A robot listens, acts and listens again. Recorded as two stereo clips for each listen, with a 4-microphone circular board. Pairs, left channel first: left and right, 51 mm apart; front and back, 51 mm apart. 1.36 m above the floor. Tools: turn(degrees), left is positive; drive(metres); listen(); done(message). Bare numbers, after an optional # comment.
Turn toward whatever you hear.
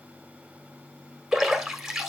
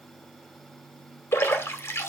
# The splash: 10° right.
turn(-10)
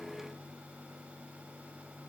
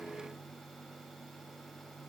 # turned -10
done("I heard a splash from this way, but can't make it out now.")